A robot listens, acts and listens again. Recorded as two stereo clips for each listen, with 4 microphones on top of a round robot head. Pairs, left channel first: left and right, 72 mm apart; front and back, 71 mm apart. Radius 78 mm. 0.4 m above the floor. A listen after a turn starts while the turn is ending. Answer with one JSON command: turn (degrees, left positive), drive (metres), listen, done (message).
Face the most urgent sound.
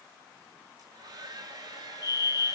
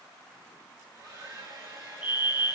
{"turn": 115}
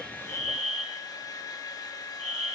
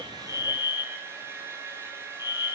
{"done": "Found it: a fire alarm, straight ahead, over 4 m away."}